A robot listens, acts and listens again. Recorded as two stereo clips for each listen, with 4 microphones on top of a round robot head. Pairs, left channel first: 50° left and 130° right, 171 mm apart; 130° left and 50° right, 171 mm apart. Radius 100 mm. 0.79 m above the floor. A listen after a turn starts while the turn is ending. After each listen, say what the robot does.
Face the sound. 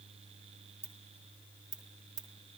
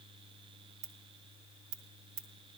Turn 60° right.
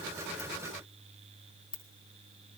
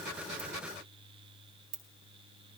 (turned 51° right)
Turn 10° right.
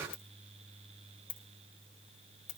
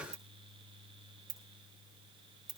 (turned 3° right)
Found it: a ringtone, straight ahead, 1 to 2 m away.